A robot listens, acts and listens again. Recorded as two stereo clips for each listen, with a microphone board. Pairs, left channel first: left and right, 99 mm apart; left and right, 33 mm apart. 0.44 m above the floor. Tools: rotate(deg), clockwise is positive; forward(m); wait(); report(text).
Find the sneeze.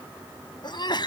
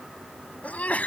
rotate(-50)
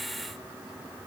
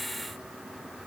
wait()
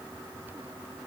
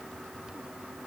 report("I heard a sneeze, but can't make it out now. It was about straight ahead or 80° left.")